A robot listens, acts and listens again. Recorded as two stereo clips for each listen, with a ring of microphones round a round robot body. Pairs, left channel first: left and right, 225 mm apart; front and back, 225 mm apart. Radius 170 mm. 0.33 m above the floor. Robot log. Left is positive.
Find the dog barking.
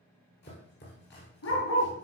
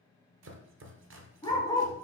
note: The dog barking: 75° left.
cmd yaw +75
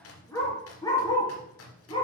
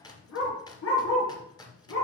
note: The dog barking is now 20° left.
cmd yaw +20
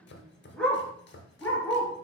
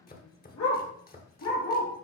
note: The dog barking is now 10° left.
cmd yaw +10
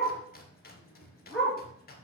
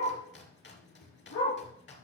end: Facing the dog barking, 2 to 4 m away.